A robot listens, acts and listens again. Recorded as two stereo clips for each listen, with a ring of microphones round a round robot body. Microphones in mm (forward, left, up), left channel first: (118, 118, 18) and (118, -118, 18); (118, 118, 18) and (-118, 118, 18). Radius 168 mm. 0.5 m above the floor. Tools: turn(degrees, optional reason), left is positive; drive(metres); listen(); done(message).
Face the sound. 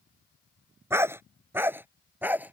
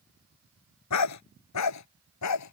done("Facing the dog barking.")